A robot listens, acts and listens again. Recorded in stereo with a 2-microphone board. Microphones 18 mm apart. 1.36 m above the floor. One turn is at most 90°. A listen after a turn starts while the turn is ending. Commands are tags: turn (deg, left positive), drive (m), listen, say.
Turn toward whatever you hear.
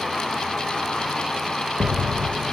<turn deg="-90"/>
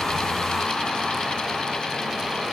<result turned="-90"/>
<say>Facing where the explosion came from. I can't hear it now.</say>